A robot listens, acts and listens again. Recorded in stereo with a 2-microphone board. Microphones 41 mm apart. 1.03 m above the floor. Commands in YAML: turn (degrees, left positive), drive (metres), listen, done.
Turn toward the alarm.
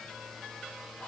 listen: true
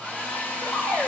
turn: 90
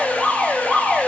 done: "Found it: an alarm, straight ahead, over 4 m away."